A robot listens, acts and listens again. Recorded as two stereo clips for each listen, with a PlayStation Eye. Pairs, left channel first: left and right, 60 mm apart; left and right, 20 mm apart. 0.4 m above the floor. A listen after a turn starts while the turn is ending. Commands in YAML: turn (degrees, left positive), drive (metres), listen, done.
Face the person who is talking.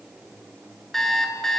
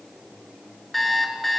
listen: true
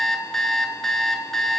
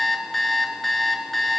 listen: true
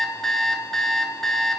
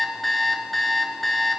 done: "I can't make out anyone speaking, only an alarm clock."